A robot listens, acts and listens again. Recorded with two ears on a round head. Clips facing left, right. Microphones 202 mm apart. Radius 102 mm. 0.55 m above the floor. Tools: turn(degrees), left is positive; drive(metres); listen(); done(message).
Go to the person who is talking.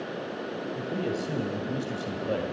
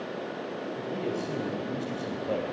turn(degrees=15)
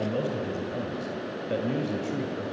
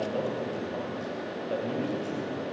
turn(degrees=150)
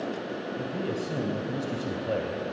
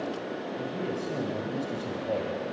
turn(degrees=10)
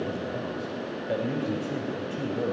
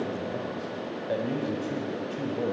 drive(metres=1.0)
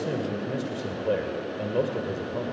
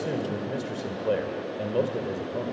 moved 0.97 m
drive(metres=1.0)
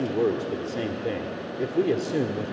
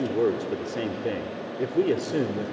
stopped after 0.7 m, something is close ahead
done("I am next to the man speaking.")